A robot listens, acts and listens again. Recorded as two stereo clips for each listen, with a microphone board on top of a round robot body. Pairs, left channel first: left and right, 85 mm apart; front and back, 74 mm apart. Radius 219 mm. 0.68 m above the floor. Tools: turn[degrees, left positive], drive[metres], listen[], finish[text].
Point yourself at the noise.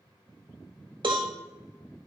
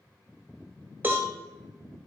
Thought: The cowbell: 115° right.
Action: turn[-115]
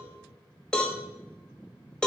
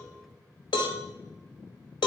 Thought: The cowbell is now 10° left.
Action: turn[10]
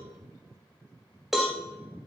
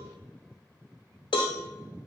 Action: finish[Found it: a cowbell, straight ahead, 1 to 2 m away.]